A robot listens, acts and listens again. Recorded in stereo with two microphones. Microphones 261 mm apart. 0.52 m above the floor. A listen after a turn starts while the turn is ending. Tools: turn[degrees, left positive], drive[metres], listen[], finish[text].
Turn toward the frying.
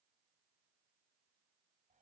Action: listen[]
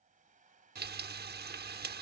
Thought: The frying: about 40° right or 140° right.
Action: turn[-40]
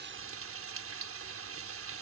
Thought: So it is at 95° right.
Action: turn[-95]
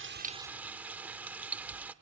Thought: The frying is now 10° right.
Action: turn[-10]
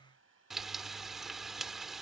Action: finish[Found it: frying, straight ahead, under 1 m away.]